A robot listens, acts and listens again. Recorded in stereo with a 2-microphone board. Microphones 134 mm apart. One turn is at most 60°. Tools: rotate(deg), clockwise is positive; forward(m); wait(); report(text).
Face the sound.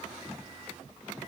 wait()
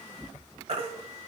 rotate(55)
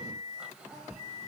wait()
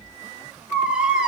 rotate(10)
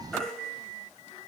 report("Found it: a baby crying, straight ahead, 1 to 2 m away.")